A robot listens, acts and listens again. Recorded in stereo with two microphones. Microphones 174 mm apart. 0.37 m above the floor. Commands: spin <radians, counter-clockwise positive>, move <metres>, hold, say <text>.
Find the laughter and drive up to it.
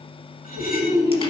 spin -0.26
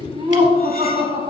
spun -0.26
spin -2.62
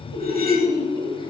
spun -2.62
spin 0.52
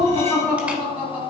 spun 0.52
spin -0.17
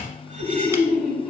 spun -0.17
move 1.0
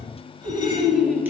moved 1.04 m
move 1.0
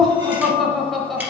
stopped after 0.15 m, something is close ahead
say Arrived at the laughter, straight ahead.